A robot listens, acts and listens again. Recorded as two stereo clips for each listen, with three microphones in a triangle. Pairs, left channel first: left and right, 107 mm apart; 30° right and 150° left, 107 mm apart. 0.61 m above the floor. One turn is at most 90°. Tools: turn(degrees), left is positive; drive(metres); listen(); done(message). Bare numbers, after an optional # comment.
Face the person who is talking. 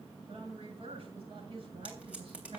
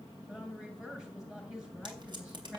# The woman speaking: 125° right.
turn(-90)
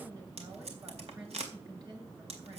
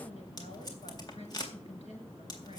# The woman speaking is now 40° right.
turn(-40)
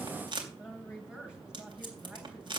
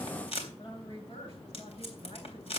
done("Found it: a woman speaking, straight ahead.")